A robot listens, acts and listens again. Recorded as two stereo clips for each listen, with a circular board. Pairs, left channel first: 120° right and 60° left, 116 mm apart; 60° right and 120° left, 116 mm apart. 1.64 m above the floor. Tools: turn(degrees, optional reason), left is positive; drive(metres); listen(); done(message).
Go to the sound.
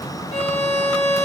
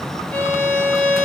turn(degrees=-140, reason="The violin: 140° right.")
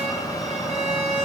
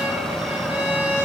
turn(degrees=40, reason="The violin is now 40° left.")
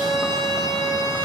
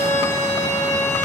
turn(degrees=10, reason="The violin is now 10° left.")
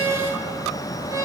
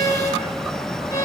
drive(metres=1.0)
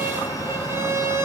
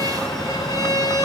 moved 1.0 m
drive(metres=1.0)
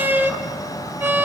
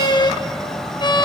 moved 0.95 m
turn(degrees=-10, reason="The violin is now 10° right.")
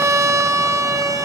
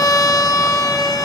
drive(metres=1.0)
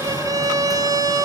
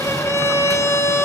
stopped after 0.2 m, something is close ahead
done("Arrived at the violin, straight ahead.")